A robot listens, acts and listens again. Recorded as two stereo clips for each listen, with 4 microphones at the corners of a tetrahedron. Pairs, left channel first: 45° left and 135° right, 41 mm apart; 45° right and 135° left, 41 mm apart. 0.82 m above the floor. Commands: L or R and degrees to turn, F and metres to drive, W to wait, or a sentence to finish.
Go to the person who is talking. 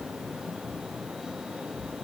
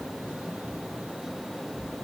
W
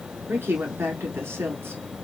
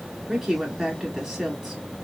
R140
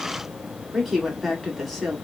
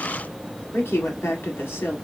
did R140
R45
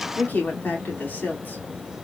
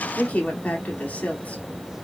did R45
L10
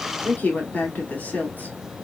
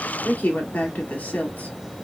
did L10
F1.0
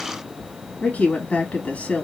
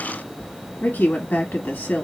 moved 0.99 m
F1.0
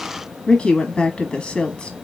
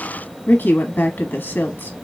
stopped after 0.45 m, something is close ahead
R10
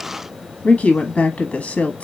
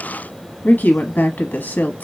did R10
Arrived at the woman speaking, straight ahead.